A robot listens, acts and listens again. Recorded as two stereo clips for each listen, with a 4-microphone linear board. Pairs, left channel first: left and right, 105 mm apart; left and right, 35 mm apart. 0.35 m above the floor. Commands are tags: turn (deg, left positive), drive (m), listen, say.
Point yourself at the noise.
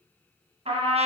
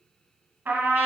<turn deg="-75"/>
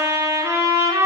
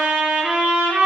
<turn deg="-30"/>
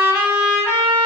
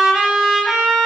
<turn deg="-15"/>
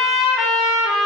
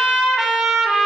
<say>Facing the trumpet, 1 to 2 m away.</say>